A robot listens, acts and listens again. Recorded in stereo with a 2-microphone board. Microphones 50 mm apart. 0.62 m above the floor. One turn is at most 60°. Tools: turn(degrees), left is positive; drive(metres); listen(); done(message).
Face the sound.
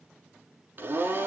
turn(degrees=-40)
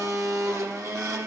turn(degrees=-60)
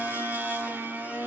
turn(degrees=-40)
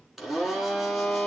done("Facing the blender, 2 to 4 m away.")